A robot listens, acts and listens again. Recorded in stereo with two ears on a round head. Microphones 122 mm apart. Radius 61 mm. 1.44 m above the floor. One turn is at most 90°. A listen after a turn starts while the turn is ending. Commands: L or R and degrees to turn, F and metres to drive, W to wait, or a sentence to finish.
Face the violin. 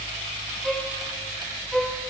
L30
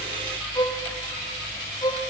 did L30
L90
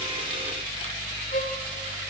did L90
L55
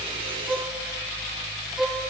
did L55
Facing the violin, 2 to 4 m away.